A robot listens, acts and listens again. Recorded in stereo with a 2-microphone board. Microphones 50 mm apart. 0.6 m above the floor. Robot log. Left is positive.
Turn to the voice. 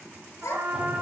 cmd yaw +90
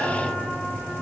cmd idle
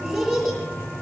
end: Found it: a child speaking, straight ahead.